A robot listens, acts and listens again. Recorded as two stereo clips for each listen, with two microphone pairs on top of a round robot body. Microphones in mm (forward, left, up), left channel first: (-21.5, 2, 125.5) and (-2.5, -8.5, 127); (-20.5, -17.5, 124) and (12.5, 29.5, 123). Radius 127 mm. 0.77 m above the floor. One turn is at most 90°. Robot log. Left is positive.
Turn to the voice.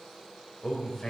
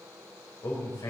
note: The man speaking: 145° right.
cmd yaw -90
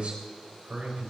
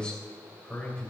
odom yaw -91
note: The man speaking is now 55° right.
cmd yaw -55
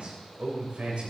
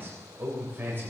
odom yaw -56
end: Facing the man speaking.